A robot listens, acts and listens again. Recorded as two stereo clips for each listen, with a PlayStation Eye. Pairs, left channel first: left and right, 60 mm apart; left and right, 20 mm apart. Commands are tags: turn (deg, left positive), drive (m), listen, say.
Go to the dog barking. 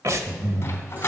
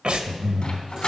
<turn deg="40"/>
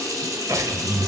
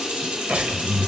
<listen/>
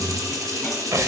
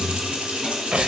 <listen/>
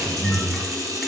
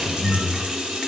<say>I heard a dog barking, but can't make it out now. It was about straight ahead or 100° left. I did not reach it.</say>